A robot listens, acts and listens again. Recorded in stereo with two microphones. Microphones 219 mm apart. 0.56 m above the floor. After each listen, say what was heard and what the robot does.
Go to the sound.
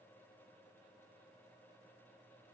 Keep listening.
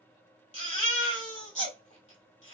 The baby crying: about 30° left or 150° left. Turn 30° left.
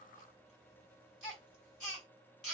Drive 1.0 m forward.
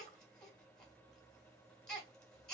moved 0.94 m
Drive 1.0 m forward.
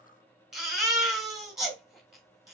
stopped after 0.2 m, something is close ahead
Arrived at the baby crying, straight ahead.